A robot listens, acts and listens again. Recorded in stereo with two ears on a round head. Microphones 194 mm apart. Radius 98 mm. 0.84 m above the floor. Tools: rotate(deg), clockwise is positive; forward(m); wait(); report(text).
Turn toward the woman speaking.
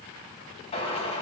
wait()
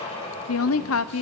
rotate(-70)
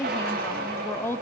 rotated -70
rotate(-10)
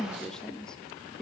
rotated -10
report("Facing the woman speaking.")